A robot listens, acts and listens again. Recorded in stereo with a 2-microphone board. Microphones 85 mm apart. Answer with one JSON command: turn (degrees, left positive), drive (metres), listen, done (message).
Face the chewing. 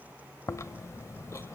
{"turn": 35}
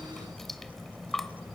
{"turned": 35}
{"done": "Found it: chewing, straight ahead, under 1 m away."}